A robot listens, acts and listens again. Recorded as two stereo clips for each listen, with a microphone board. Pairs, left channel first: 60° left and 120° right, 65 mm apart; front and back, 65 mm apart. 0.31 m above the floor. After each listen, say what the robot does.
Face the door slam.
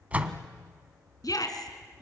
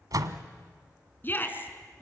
Turn 170° left.
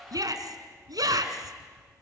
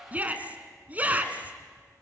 I heard a door slam from this way, but can't make it out now.